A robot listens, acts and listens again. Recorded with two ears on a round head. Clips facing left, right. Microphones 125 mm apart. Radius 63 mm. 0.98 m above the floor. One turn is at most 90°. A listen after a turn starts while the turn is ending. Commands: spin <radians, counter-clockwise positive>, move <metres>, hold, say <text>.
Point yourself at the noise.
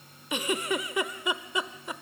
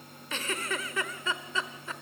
spin 0.52
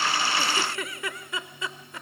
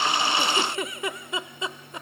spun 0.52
spin -0.35
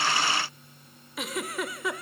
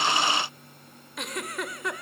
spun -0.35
say Facing the giggle, 1 to 2 m away.